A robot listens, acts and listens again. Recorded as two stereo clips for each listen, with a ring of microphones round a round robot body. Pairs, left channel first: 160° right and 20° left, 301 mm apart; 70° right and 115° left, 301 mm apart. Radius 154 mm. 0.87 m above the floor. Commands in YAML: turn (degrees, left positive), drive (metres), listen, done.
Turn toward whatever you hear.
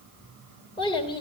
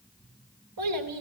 turn: 130
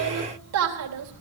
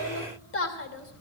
turn: -20
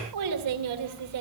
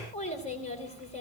done: "Found it: a child speaking, straight ahead, 2 to 4 m away."